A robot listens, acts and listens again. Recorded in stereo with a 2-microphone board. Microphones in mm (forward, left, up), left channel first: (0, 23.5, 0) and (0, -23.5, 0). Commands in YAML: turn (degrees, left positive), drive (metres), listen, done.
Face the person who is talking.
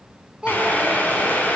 turn: -15
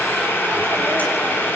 listen: true
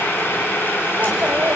listen: true
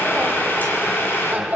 turn: -45
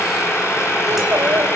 listen: true
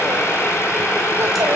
listen: true
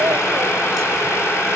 done: "I heard a child speaking, but can't make it out now. It was about straight ahead or 90° right."